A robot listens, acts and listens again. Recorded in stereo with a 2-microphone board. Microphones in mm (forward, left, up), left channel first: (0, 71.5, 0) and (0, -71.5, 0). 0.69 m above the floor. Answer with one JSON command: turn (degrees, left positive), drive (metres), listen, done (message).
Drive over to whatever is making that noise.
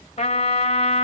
{"turn": 50}
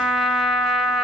{"drive": 1.0}
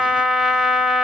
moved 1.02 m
{"drive": 1.0}
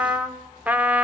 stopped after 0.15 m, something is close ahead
{"turn": -10}
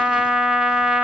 {"done": "I am next to the trumpet."}